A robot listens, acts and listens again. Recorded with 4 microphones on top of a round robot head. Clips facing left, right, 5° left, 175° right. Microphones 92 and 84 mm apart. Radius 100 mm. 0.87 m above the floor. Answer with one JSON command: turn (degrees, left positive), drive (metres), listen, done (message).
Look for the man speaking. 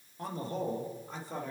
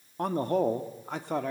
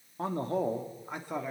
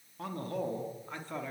{"turn": -75}
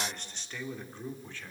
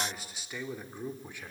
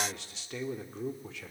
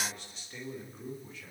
{"turn": -15}
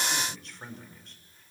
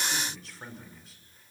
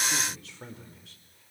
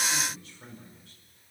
{"done": "Facing the man speaking."}